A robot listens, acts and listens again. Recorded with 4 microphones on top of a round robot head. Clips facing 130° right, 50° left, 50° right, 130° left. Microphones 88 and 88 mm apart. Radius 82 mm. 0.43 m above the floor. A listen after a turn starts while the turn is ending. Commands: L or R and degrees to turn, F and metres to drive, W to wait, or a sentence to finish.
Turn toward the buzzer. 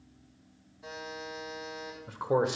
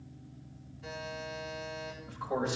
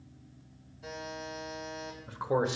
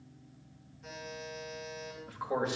R60
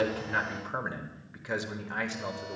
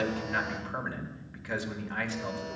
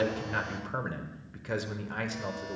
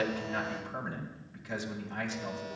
W
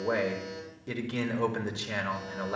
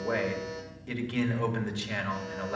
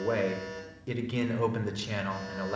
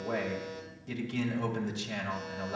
R10
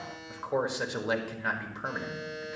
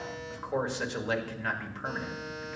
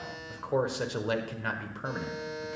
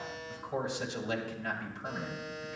Facing the buzzer, over 4 m away.